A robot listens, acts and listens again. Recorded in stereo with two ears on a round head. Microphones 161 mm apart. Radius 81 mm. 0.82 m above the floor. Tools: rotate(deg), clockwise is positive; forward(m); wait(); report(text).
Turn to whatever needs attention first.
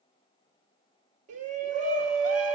rotate(45)
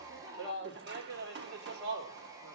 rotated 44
rotate(85)
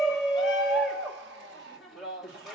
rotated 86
report("Facing the shout, 1 to 2 m away.")